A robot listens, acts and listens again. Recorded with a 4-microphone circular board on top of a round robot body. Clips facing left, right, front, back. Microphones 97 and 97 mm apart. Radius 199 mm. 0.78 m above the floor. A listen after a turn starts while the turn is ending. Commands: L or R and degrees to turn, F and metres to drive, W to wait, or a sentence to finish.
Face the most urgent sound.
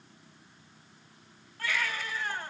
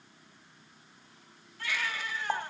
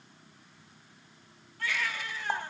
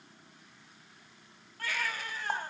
L135
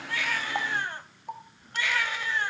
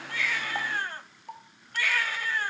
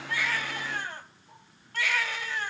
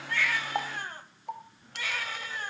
L20
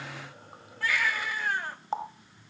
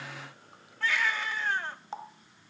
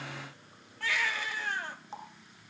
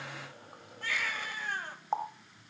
Found it: a baby crying, straight ahead, over 4 m away.